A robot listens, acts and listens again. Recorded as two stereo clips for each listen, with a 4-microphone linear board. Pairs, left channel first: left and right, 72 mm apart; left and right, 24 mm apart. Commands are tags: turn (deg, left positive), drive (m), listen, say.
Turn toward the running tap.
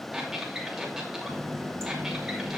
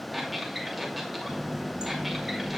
<turn deg="-45"/>
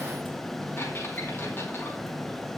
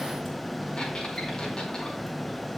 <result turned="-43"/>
<say>Found it: a running tap, straight ahead, over 4 m away.</say>